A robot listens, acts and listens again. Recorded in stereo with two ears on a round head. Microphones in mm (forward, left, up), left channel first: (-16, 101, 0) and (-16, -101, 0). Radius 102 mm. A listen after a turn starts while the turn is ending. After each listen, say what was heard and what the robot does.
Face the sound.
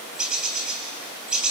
Turn 30° right.
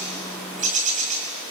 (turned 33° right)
So it is at 145° right. Turn 145° right.
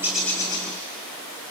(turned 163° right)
The bird is now 20° left. Turn 20° left.
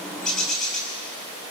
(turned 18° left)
Found it: a bird, straight ahead, over 4 m away.